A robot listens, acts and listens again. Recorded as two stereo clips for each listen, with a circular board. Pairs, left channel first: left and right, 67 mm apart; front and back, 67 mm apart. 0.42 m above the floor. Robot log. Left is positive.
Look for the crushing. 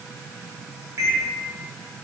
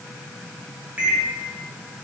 cmd idle
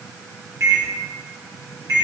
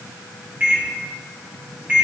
cmd idle
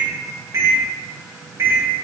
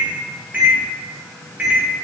end: I can't make out crushing, only a microwave.